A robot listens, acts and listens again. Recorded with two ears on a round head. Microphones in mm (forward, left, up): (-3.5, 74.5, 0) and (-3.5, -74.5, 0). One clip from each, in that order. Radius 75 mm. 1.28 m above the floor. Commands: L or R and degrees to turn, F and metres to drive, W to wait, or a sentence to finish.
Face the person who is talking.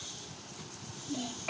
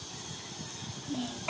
R30
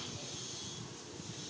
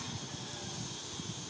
W
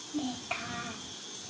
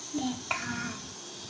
R140
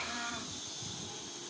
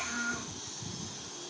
R40
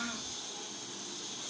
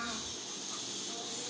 L10
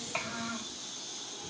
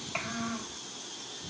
Facing the child speaking.